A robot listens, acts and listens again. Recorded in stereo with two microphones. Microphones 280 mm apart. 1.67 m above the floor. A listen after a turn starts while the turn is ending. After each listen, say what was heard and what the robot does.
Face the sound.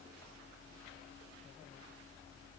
Keep listening.
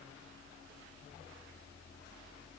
Keep listening.
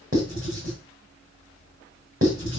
The writing: about 50° right or 130° right. Turn 50° right.
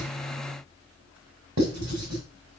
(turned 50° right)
So it is at 80° right. Turn 80° right.
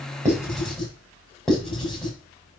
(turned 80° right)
Facing the writing.